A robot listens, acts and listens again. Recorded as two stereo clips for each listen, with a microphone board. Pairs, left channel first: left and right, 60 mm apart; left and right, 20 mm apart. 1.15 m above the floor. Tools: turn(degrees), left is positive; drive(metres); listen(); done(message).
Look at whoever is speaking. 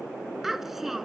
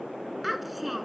turn(degrees=-30)
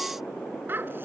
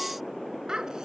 turn(degrees=-145)
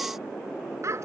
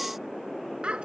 turn(degrees=-55)
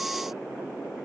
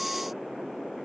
listen()
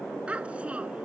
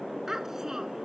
turn(degrees=-20)
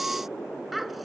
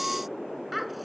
done("Facing the child speaking.")